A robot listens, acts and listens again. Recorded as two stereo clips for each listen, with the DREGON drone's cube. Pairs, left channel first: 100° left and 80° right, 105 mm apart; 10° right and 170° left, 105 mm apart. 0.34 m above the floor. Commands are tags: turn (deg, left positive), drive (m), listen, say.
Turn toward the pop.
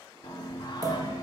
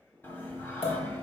<turn deg="-30"/>
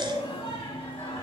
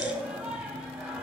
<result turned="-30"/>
<say>Facing where the pop came from. I can't hear it now.</say>